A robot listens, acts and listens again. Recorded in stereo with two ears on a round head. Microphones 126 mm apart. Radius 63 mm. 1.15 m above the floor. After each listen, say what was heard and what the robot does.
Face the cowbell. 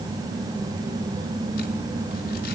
Keep listening.
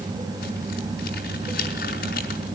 Keep listening.
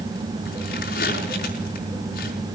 I can't make out a cowbell to turn to.